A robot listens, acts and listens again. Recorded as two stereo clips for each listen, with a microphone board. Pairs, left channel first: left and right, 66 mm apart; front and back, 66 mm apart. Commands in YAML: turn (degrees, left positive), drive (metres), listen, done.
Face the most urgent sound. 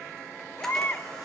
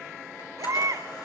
turn: 145
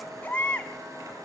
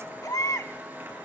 turn: 25
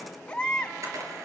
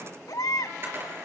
turn: 15
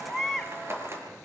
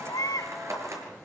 done: "Facing the baby crying, 1 to 2 m away."